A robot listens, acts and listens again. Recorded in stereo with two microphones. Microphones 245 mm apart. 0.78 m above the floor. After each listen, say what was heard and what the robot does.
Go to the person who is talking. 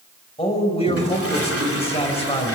The man speaking: about 25° left or 155° left. Turn 25° left.
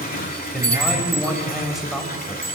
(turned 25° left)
Drive 1.0 m forward.
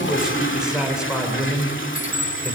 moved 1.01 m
Drive 1.0 m forward.
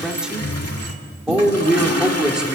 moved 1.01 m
Drive 1.0 m forward.
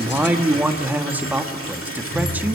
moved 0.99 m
The man speaking is now 10° right. Turn 10° right.
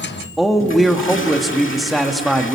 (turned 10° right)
Drive 1.0 m forward.
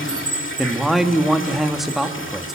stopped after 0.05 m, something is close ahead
Arrived at the man speaking, straight ahead.